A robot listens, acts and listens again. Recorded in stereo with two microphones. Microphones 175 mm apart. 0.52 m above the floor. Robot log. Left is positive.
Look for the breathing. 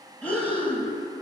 cmd yaw +30
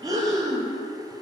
note: So it is at 20° right.
cmd yaw -20
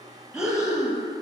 end: Facing the breathing.